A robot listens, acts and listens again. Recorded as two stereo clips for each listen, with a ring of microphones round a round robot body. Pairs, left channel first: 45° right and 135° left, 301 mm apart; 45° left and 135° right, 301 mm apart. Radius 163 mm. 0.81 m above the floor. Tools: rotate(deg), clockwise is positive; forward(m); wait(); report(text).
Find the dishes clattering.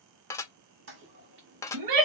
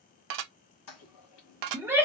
rotate(125)
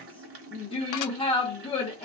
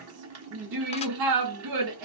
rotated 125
wait()
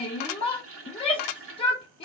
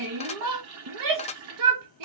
rotate(25)
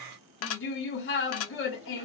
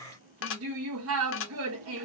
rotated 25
report("Facing the dishes clattering, under 1 m away.")